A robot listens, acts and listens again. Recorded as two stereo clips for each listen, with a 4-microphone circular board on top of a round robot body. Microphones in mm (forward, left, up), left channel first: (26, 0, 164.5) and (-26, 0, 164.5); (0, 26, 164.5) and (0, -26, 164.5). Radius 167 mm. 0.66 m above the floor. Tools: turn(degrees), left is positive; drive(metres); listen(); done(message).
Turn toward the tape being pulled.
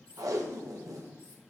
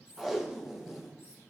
turn(degrees=-175)
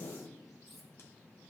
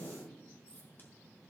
turn(degrees=35)
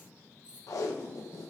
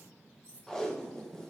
turn(degrees=10)
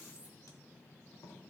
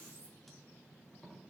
done("Facing the tape being pulled, 1 to 2 m away.")